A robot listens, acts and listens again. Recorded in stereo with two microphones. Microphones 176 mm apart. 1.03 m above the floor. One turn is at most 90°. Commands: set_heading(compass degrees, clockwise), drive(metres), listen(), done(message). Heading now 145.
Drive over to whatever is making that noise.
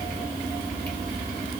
listen()
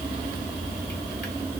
listen()
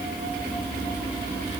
done("I can't make out anything.")